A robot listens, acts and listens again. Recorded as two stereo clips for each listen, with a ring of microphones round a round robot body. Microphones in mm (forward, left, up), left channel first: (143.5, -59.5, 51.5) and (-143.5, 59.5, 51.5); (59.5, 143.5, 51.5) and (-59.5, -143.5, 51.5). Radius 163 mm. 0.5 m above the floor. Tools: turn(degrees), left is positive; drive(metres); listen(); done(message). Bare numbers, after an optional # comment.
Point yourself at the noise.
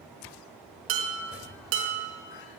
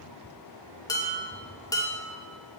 # The dishes clattering: 145° left.
turn(145)
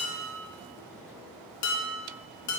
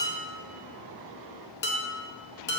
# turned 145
# The dishes clattering is now 10° left.
turn(10)
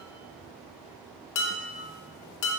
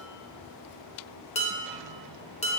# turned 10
done("Facing the dishes clattering, under 1 m away.")